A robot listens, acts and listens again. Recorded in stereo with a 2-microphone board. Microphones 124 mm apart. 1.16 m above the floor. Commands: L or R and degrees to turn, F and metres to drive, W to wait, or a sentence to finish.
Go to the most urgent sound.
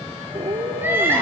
R15
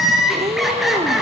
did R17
F1.0
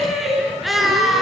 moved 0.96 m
F1.0
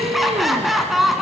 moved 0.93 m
F1.0
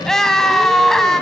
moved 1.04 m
F1.0
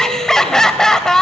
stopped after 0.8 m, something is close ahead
Arrived at the crying, straight ahead.